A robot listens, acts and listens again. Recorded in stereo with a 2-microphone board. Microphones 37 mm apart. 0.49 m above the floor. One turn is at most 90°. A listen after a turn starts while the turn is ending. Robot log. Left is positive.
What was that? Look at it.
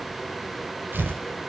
note: The tearing paper: about 65° right or 115° right.
cmd yaw -65
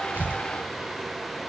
cmd idle
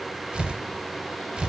note: So it is at 30° right.
cmd yaw -30
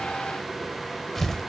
end: Found it: tearing paper, straight ahead, 1 to 2 m away.